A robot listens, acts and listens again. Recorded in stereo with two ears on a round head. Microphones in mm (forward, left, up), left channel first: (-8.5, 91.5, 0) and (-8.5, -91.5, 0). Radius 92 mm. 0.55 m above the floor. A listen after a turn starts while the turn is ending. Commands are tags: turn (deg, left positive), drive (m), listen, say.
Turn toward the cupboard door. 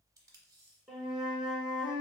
<listen/>
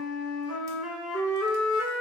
<listen/>
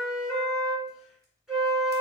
<say>I can't make out a cupboard door to turn to.</say>